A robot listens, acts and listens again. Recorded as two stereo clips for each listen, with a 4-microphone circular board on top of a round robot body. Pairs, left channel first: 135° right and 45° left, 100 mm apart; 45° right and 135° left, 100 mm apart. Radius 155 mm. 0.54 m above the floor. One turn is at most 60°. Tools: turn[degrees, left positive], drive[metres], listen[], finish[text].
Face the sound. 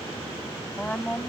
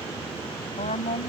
Thought: The woman speaking: 55° right.
Action: turn[-55]
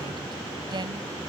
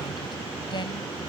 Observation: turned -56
Action: listen[]
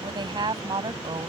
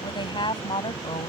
Action: finish[Found it: a woman speaking, straight ahead.]